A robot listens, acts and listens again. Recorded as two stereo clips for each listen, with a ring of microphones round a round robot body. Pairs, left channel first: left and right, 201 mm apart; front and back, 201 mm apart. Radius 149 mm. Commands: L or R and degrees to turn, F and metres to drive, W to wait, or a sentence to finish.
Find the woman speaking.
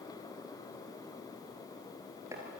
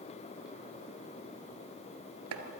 W
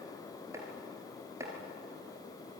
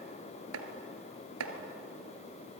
W
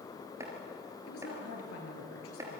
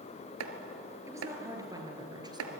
L110
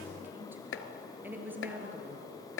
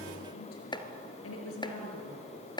R10
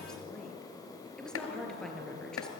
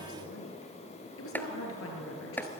Found it: a woman speaking, straight ahead, over 4 m away.